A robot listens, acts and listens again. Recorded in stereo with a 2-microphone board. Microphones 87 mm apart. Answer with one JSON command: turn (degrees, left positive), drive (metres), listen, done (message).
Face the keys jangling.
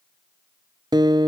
{"listen": true}
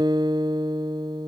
{"listen": true}
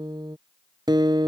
{"done": "I can't make out keys jangling, only a guitar."}